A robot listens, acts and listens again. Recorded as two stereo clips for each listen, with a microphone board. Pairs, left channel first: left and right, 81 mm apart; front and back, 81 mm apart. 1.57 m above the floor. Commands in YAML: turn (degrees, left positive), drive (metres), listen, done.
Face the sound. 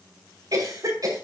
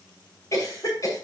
turn: -50
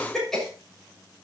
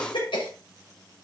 done: "Facing the cough."